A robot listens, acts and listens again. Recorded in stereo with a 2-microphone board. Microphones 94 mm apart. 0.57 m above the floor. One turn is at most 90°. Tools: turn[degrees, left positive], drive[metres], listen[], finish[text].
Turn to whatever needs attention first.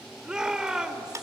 Action: turn[-30]
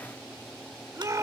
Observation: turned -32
Thought: So it is at 140° right.
Action: turn[-90]
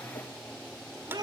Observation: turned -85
Thought: The shout is now 55° right.
Action: turn[-55]
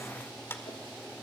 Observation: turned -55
Action: listen[]
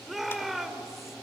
Action: finish[Facing the shout, 1 to 2 m away.]